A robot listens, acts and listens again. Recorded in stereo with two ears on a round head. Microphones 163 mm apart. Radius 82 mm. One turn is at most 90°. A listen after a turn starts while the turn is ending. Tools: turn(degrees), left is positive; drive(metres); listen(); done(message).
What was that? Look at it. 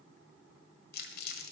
turn(degrees=60)
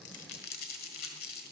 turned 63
turn(degrees=55)
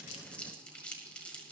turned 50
done("Facing the crumpling.")